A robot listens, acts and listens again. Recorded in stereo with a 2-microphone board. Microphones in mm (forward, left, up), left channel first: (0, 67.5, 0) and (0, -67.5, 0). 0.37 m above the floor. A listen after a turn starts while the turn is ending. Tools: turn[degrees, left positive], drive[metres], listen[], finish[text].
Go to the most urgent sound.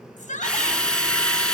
Thought: The shout: about 65° left or 115° left.
Action: turn[65]
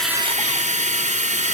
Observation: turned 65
Action: listen[]
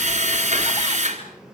Action: listen[]
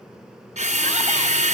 Action: finish[I heard a shout, but can't make it out now. It was about straight ahead or 50° left. I did not reach it.]